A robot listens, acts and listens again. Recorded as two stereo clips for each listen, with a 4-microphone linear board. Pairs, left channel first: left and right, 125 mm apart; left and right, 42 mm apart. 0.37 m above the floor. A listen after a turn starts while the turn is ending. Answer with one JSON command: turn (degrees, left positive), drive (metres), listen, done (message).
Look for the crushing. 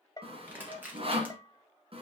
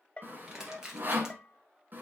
{"turn": -30}
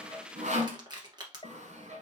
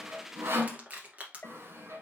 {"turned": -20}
{"turn": -145}
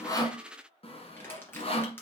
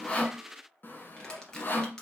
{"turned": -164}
{"turn": 20}
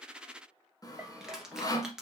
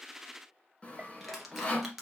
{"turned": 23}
{"done": "Found it: crushing, straight ahead."}